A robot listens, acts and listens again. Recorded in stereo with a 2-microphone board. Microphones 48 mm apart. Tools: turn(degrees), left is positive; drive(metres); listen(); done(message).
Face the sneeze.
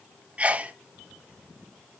turn(degrees=-30)
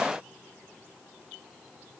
listen()
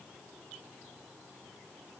done("I heard a sneeze, but can't make it out now. It was about straight ahead or 120° right.")